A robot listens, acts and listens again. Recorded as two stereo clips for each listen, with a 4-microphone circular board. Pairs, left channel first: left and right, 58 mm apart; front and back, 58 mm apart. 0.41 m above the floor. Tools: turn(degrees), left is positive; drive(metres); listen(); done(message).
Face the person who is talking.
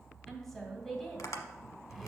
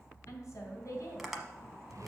done("Found it: a woman speaking, straight ahead, 2 to 4 m away.")